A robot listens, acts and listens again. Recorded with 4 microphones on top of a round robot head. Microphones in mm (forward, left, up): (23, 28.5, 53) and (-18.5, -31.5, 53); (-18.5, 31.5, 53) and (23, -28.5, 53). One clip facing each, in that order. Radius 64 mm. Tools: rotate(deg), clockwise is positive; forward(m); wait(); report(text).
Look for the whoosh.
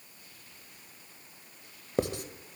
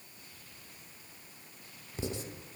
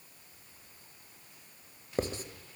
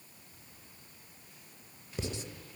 wait()
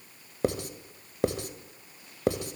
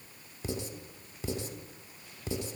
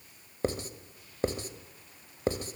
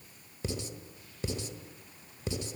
wait()
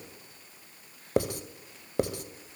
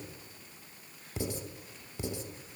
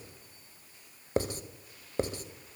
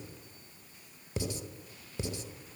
report("I can't make out a whoosh to turn to.")